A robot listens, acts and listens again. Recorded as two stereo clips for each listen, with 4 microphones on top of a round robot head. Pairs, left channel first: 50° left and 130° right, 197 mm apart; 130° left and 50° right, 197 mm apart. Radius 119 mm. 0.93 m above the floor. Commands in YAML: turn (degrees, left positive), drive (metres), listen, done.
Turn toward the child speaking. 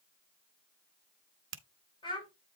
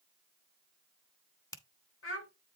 turn: 115
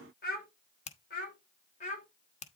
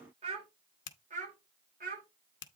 done: "Facing the child speaking, 2 to 4 m away."